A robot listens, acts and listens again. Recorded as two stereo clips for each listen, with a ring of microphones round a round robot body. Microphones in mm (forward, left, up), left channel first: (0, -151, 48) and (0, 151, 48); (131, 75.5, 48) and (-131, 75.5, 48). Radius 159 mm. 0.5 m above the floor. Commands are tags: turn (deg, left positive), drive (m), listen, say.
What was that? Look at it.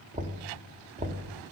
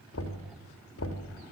<turn deg="25"/>
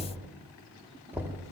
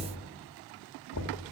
<say>Facing the knocking, 2 to 4 m away.</say>